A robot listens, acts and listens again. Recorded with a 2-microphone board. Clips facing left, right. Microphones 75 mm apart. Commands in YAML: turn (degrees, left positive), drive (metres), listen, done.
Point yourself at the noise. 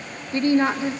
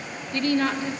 turn: 25
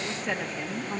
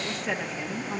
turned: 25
done: "Facing the woman speaking, 1 to 2 m away."